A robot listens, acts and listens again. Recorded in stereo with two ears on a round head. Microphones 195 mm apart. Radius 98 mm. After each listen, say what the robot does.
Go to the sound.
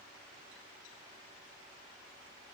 Keep listening.
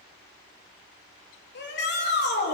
Turn 50° left.
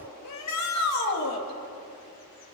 Turn 75° left.
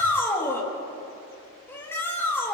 Turn 10° left.
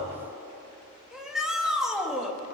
Drive 1.0 m forward.
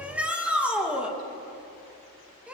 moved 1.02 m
Drive 1.0 m forward.
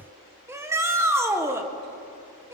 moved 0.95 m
Turn 10° right.
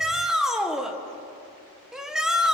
Drive 1.0 m forward.
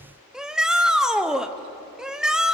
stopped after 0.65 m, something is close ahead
I am next to the shout.